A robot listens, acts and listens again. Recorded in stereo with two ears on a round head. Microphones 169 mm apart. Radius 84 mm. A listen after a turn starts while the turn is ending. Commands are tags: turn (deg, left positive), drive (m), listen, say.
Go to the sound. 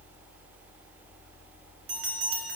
<turn deg="-55"/>
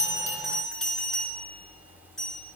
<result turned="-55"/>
<drive m="1.0"/>
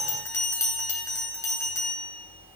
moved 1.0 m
<turn deg="15"/>
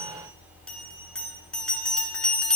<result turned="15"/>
<drive m="1.0"/>
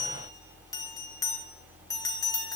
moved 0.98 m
<turn deg="20"/>
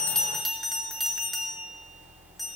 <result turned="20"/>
<drive m="1.0"/>
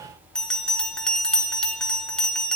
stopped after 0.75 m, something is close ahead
<say>Arrived at the bell, straight ahead.</say>